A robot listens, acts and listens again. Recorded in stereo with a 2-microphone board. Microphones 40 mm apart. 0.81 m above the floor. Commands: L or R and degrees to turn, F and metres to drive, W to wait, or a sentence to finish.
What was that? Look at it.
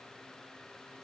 W
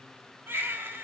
R90
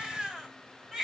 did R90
R10
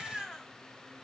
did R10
Facing the baby crying, 2 to 4 m away.